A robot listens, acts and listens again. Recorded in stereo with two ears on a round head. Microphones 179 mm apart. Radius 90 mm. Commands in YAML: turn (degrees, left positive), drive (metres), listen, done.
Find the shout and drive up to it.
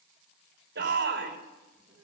turn: -55
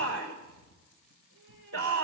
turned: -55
turn: -65
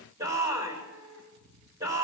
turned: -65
turn: -15
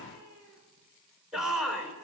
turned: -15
drive: 1.0
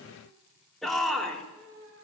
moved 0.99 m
drive: 1.0
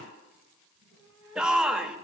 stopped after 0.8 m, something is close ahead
done: "I am next to the shout."